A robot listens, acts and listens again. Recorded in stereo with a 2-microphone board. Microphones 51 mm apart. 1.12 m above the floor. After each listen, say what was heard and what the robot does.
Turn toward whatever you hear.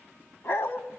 The dog barking: about 60° left or 120° left. Turn 60° left.
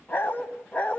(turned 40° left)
So it is at 25° left. Turn 25° left.
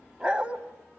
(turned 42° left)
The dog barking is now 25° right. Turn 25° right.
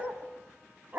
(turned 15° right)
The dog barking is now 40° right. Turn 40° right.
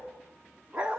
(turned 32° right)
The dog barking is now 25° right. Turn 25° right.
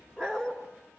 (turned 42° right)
The dog barking is now 10° left. Turn 10° left.
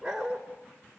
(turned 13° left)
Found it: a dog barking, straight ahead, 2 to 4 m away.